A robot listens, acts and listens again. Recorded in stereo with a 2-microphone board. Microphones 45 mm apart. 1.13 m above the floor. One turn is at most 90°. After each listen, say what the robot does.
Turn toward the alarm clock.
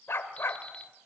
Turn 25° left.
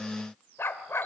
Keep listening.
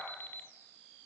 Turn 90° left.
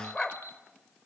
Turn 70° left.
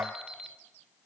Facing the alarm clock.